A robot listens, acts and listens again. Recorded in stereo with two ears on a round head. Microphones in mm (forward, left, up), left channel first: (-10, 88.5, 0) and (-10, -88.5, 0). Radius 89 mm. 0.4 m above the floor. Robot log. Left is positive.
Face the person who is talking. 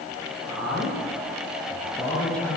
cmd yaw +30
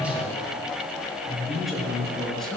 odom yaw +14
cmd yaw +30
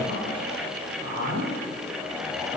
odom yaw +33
note: So it is at 20° right.
cmd yaw -20
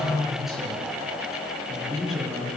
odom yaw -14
end: Found it: a man speaking, straight ahead, over 4 m away.